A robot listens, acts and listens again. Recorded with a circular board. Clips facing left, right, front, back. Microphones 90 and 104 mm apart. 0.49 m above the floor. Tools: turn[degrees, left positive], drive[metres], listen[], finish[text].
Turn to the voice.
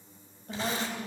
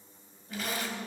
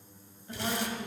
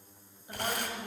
Thought: The woman speaking: 110° left.
Action: turn[110]
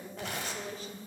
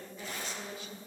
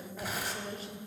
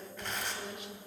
Thought: The woman speaking is now 50° left.
Action: turn[50]
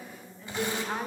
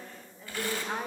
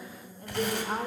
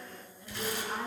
Action: finish[Found it: a woman speaking, straight ahead, 1 to 2 m away.]